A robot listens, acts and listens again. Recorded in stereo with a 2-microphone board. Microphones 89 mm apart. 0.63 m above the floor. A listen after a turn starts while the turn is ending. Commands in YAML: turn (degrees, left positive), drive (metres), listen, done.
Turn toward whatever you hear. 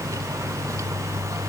listen: true
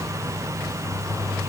listen: true
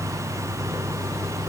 done: "I can't make out anything."